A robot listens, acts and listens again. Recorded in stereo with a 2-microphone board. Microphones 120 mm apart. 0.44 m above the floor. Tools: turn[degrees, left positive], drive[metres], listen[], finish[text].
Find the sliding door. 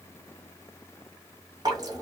Action: listen[]
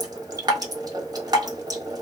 Action: listen[]
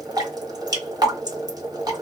Action: finish[I can't make out a sliding door to turn to.]